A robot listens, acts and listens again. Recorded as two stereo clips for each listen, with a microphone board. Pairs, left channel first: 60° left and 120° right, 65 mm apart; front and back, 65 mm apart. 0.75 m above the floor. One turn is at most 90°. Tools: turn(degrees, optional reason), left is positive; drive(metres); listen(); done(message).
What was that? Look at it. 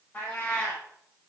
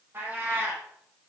turn(degrees=90, reason="The cat meowing: 130° left.")
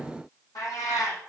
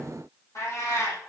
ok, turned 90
turn(degrees=40, reason="The cat meowing is now 40° left.")
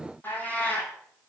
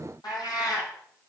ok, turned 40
done("Found it: a cat meowing, straight ahead, over 4 m away.")